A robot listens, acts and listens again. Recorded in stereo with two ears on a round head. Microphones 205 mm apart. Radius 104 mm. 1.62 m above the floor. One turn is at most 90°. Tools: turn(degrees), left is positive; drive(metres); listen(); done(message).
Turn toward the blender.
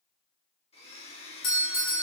turn(degrees=25)
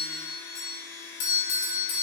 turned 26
turn(degrees=90)
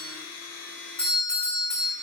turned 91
turn(degrees=35)
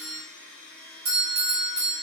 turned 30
done("Facing the blender.")